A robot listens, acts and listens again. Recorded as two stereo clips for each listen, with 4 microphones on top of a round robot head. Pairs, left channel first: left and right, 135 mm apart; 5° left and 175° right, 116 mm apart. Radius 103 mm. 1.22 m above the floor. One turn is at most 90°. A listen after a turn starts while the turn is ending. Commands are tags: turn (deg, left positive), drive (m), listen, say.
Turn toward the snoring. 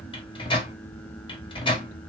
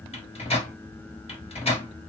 <listen/>
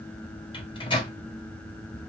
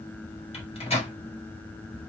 <listen/>
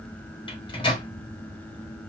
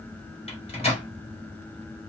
<say>I can't make out snoring to turn to.</say>